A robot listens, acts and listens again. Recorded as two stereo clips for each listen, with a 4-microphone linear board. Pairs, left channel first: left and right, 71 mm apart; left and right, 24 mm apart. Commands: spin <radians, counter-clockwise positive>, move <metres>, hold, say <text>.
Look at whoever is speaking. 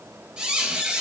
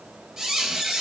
hold
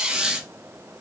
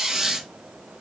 hold
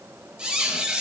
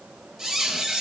say I can't make out anyone speaking, only a squeak.